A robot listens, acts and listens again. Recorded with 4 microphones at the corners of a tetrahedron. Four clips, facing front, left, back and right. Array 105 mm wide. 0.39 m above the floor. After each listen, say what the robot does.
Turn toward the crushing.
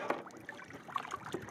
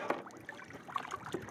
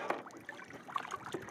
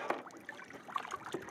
Keep listening.
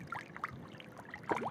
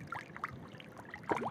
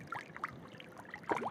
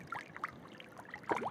Keep listening.
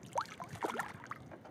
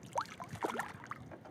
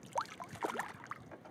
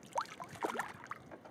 I can't make out crushing.